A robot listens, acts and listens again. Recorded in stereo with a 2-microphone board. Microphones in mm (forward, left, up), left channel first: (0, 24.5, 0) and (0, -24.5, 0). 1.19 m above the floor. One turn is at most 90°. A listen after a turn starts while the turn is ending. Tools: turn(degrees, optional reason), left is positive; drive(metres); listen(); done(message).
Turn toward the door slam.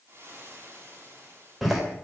turn(degrees=-30)
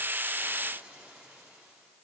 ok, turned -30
listen()
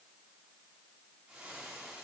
done("I heard a door slam, but can't make it out now. It was about 25° left or 145° right.")